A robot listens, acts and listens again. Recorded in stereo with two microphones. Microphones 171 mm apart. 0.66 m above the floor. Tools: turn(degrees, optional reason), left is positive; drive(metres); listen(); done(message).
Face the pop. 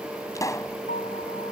turn(degrees=20, reason="The pop: about 20° left or 160° left.")
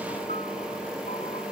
listen()
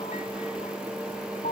done("I heard a pop, but can't make it out now. It was about straight ahead or 140° left.")